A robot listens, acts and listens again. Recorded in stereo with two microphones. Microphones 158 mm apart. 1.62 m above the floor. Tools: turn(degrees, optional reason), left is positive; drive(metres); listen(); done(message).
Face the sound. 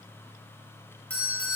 turn(degrees=30)
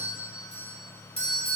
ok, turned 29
turn(degrees=140, reason="So it is at 140° left.")
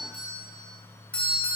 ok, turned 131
turn(degrees=10, reason="The doorbell is now 10° left.")
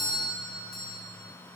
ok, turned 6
done("Found it: a doorbell, straight ahead.")